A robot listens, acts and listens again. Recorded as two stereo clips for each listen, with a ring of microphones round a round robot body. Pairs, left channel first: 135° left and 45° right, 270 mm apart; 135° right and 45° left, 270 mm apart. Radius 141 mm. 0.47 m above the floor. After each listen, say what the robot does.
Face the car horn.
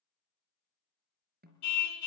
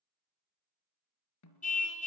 Turn 160° left.
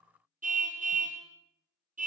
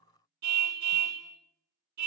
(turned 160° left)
Turn 20° left.
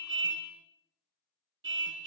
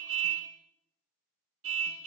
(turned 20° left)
Found it: a car horn, straight ahead, 2 to 4 m away.